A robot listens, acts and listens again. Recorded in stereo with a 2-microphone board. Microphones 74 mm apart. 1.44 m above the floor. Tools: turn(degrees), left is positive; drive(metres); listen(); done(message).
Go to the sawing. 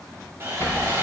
turn(degrees=-35)
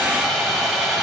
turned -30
drive(metres=1.0)
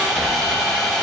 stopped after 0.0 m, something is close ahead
done("Something is in my way. I am facing the sawing but have not reached it.")